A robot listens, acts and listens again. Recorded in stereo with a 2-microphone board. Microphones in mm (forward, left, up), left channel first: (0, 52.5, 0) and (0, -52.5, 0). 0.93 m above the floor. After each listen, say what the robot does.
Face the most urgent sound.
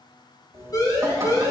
Turn 40° left.
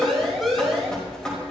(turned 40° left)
Facing the siren.